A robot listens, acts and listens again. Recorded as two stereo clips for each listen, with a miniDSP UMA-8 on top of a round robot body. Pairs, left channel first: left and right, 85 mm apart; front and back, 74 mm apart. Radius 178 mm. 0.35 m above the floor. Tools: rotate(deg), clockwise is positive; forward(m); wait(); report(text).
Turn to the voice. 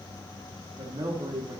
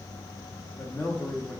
rotate(55)
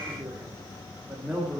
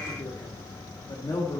rotate(10)
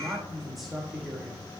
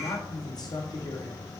report("Found it: a man speaking, straight ahead, 1 to 2 m away.")